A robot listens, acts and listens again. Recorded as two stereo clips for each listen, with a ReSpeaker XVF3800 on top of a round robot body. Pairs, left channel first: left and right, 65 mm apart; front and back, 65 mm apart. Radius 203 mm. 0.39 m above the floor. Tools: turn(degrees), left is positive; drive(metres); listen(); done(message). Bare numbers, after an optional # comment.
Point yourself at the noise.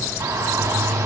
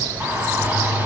# The shout: 120° right.
turn(-120)
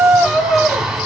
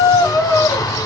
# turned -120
# The shout is now 10° right.
turn(-10)
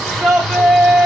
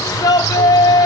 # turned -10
done("Found it: a shout, straight ahead.")